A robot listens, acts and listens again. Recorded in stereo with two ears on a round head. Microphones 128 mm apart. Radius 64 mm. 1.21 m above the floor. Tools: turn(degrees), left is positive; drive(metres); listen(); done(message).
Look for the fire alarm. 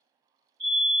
turn(degrees=-40)
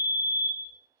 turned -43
done("Found it: a fire alarm, straight ahead.")